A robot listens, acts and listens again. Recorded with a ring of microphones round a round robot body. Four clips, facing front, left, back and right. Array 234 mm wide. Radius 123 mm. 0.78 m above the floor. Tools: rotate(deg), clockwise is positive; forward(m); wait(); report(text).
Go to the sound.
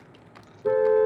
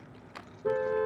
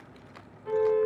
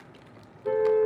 rotate(-25)
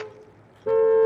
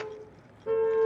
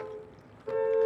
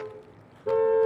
rotate(10)
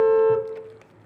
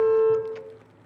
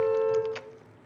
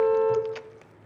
forward(1.0)
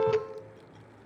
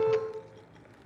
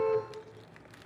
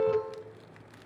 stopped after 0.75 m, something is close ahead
report("Something is in my way. I am facing the car horn but have not reached it.")